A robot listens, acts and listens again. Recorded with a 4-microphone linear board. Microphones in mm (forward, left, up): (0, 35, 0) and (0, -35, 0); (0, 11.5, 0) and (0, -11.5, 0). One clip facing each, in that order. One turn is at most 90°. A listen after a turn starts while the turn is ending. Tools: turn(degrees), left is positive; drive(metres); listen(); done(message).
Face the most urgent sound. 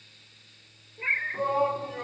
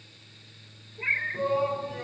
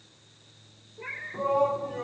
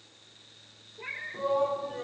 turn(degrees=40)
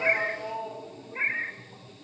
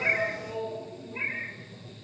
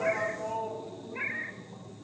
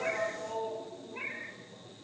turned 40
turn(degrees=90)
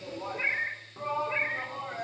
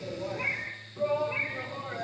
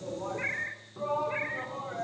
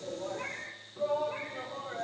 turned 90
turn(degrees=30)
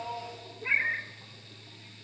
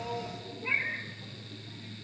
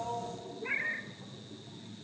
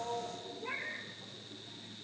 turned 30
listen()
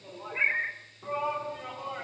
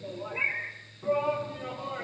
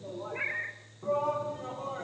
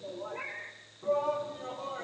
turn(degrees=10)
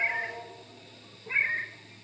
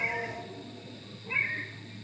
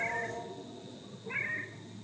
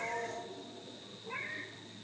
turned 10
done("Facing the shout, over 4 m away.")